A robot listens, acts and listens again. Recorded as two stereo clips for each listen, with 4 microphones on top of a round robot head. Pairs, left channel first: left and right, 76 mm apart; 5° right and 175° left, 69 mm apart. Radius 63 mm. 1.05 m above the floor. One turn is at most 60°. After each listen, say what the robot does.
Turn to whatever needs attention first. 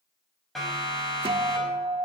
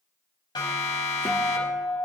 Facing the siren.